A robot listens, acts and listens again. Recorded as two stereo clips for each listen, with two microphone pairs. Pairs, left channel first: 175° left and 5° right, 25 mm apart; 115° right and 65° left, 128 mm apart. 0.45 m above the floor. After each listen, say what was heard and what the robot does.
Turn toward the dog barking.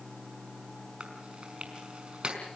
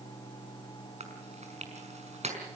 Keep listening.
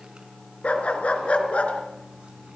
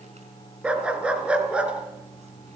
The dog barking: 145° left. Turn 145° left.
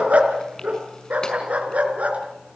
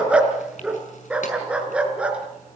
The dog barking is now 15° right. Turn 15° right.
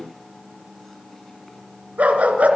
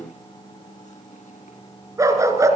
Facing the dog barking, 2 to 4 m away.